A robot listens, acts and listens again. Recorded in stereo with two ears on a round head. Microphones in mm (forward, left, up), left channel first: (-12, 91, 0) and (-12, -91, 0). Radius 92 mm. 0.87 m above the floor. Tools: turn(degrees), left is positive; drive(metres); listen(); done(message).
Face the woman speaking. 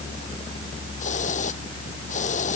listen()
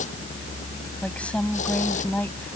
turn(degrees=30)
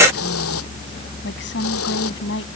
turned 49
turn(degrees=115)
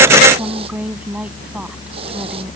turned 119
done("Found it: a woman speaking, straight ahead.")